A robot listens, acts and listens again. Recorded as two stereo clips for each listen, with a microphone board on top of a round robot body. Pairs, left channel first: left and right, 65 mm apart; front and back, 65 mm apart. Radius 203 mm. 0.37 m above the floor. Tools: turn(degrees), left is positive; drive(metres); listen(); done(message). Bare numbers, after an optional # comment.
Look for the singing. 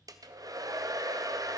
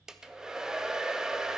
listen()
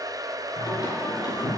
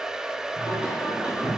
# The singing: 110° left.
turn(110)
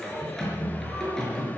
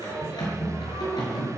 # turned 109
# The singing is now 10° left.
turn(10)
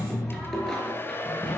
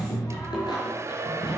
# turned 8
# The singing is now 10° left.
turn(10)
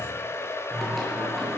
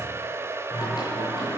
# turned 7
done("Found it: singing, straight ahead.")